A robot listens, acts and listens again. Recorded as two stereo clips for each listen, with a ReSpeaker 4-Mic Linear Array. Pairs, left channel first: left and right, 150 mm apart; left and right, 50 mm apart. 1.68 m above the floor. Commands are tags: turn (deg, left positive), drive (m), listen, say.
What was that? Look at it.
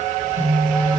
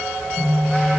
<turn deg="-60"/>
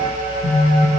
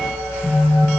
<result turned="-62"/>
<turn deg="-45"/>
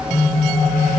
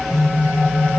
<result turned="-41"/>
<say>Found it: a phone buzzing, straight ahead, 1 to 2 m away.</say>